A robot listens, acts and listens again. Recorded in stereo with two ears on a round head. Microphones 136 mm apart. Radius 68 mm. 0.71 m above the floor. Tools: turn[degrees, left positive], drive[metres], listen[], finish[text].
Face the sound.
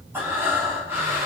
Action: turn[-30]
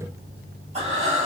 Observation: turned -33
Thought: So it is at 130° right.
Action: turn[-130]
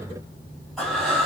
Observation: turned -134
Action: finish[Found it: breathing, straight ahead, over 4 m away.]